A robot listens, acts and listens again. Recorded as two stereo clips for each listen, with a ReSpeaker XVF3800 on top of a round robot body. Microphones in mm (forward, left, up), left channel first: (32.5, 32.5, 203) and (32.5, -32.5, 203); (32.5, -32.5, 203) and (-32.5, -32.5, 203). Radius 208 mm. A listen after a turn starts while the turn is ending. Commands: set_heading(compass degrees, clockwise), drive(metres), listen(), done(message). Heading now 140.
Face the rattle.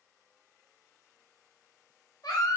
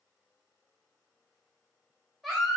listen()
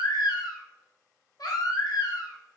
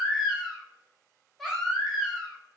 listen()
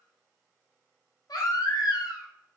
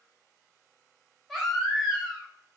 done("I can't make out a rattle to turn to.")